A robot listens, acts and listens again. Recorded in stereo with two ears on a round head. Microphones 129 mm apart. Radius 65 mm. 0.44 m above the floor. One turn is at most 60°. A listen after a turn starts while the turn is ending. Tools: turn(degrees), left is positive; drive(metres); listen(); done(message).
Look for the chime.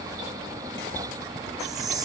turn(degrees=-25)
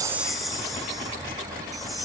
done("Facing the chime, 2 to 4 m away.")